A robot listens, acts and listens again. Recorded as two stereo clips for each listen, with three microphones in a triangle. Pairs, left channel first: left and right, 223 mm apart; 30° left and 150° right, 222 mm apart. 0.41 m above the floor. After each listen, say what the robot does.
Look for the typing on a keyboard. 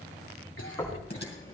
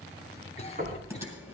Turn 135° left.
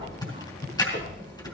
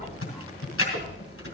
Turn 20° left.
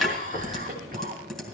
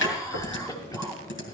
Found it: typing on a keyboard, straight ahead.